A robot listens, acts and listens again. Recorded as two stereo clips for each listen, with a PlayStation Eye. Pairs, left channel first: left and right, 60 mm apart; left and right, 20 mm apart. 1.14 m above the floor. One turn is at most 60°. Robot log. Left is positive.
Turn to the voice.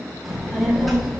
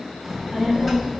cmd yaw +30
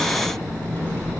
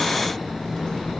note: So it is at 150° left.
cmd yaw +60
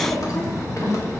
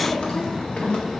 note: The child speaking is now 115° left.
cmd yaw +60
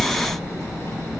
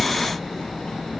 note: The child speaking is now 45° left.
cmd yaw +45
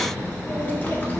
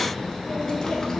note: The child speaking is now 25° left.
cmd yaw +25
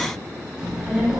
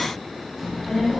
note: The child speaking is now 10° right.
cmd yaw -10
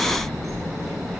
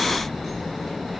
end: Facing the child speaking, 1 to 2 m away.